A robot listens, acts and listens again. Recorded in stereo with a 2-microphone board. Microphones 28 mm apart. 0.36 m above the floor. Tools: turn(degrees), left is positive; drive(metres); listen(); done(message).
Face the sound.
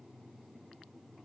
listen()
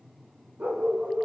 turn(degrees=-90)
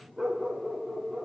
turn(degrees=-15)
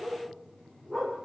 done("Facing the dog barking.")